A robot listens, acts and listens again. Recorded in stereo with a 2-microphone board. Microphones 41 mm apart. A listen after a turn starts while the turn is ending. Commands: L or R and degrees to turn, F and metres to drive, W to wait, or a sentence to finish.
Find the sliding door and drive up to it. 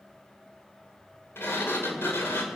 L90
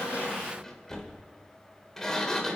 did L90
L10
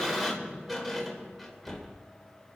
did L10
F1.0
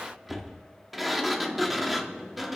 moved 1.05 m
F1.0
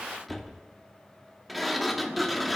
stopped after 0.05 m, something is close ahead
I am next to the sliding door.